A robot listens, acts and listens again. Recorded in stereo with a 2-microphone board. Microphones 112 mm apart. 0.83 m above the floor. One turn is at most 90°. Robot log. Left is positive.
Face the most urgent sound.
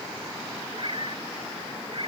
cmd idle
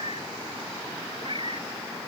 cmd idle
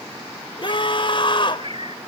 note: The scream: about 50° left or 130° left.
cmd yaw +50
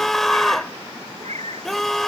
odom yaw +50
end: Found it: a scream, straight ahead.